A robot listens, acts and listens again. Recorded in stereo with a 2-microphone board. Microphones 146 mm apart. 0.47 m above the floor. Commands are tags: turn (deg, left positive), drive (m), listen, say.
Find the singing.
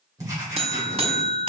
<listen/>
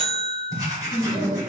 <turn deg="30"/>
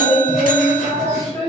<turn deg="145"/>
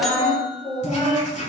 <turn deg="40"/>
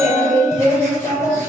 <say>Found it: singing, straight ahead, 2 to 4 m away.</say>